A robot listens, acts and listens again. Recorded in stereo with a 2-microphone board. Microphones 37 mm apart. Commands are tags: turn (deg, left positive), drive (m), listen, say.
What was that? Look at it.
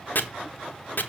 <turn deg="55"/>
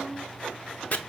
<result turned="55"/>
<turn deg="55"/>
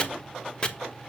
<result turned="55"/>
<turn deg="35"/>
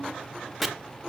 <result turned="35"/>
<say>Found it: chopping, straight ahead.</say>